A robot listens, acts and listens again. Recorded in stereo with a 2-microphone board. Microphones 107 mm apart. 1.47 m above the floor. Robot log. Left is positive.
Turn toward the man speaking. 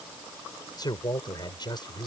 note: The man speaking: about 45° left or 135° left.
cmd yaw +45
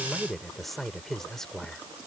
end: Facing the man speaking.